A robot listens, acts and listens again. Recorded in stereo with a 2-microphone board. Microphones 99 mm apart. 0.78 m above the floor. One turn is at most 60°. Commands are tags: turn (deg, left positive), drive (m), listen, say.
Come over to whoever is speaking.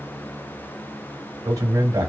<turn deg="-40"/>
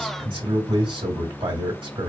<turn deg="-60"/>
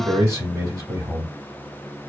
<turn deg="-40"/>
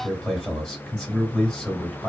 <drive m="1.0"/>
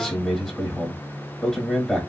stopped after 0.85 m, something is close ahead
<say>I am next to the man speaking.</say>